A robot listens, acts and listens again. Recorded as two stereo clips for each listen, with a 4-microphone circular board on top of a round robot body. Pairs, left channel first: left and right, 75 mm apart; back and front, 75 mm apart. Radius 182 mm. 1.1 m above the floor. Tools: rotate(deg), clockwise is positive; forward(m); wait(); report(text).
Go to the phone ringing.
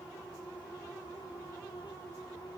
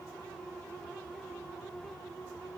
wait()
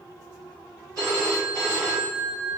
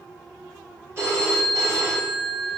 rotate(55)
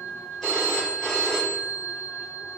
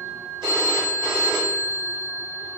forward(1.0)
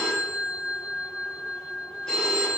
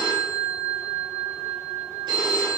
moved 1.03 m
rotate(-10)
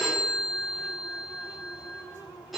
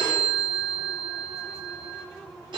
forward(1.0)
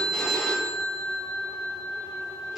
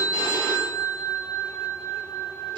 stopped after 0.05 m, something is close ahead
report("Arrived at the phone ringing, straight ahead.")